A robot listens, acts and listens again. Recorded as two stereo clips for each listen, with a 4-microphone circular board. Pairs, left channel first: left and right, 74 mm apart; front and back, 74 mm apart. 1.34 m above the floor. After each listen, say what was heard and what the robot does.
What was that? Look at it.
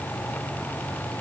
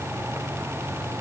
Keep listening.
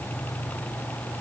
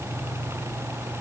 Keep listening.
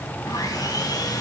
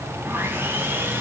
The sawing: 120° left. Turn 120° left.
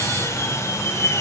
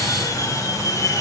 The sawing is now 40° left. Turn 40° left.
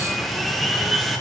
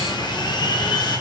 Facing the sawing.